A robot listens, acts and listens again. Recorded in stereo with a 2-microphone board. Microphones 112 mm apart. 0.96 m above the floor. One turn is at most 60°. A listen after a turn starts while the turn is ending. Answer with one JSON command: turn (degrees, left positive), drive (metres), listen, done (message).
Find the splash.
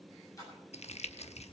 {"turn": 30}
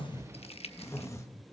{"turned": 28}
{"listen": true}
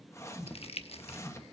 {"done": "I heard a splash, but can't make it out now. It was about straight ahead or 120° left."}